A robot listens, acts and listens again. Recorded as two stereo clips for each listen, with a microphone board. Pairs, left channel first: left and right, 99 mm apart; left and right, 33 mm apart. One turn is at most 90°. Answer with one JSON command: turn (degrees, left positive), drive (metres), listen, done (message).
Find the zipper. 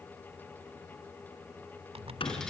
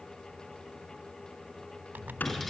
{"turn": -90}
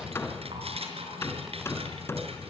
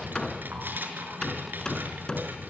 {"listen": true}
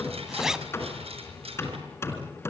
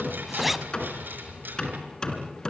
{"done": "Found it: a zipper, straight ahead."}